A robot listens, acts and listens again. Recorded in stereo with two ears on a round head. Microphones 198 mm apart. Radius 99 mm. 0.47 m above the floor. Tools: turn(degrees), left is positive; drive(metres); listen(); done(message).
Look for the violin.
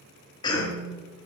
listen()
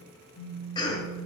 listen()
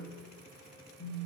done("I can't make out a violin, only a cough and a phone buzzing.")